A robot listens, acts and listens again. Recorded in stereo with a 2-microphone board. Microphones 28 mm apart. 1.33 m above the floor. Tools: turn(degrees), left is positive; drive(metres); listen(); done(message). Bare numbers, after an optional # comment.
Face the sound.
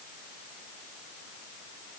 listen()
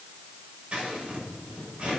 # The scissors: about 45° right or 135° right.
turn(-45)
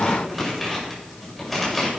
done("Found it: scissors, straight ahead, over 4 m away.")